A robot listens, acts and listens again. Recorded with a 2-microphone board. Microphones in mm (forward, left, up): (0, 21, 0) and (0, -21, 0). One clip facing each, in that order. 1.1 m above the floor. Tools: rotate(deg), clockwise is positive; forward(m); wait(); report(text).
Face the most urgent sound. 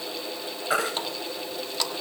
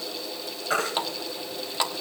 rotate(-30)
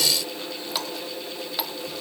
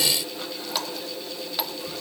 wait()
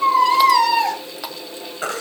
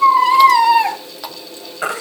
rotate(20)
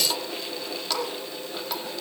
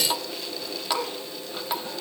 wait()
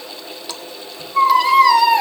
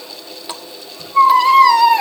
report("Facing the baby crying.")